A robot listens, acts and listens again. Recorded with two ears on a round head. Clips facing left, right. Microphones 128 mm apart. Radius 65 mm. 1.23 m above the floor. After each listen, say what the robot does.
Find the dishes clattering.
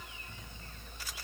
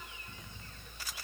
Keep listening.
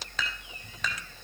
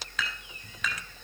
Turn 30° left.
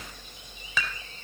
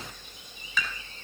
Turn 120° left.
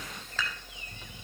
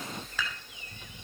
Turn 10° right.
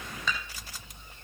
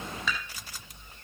Found it: dishes clattering, straight ahead, over 4 m away.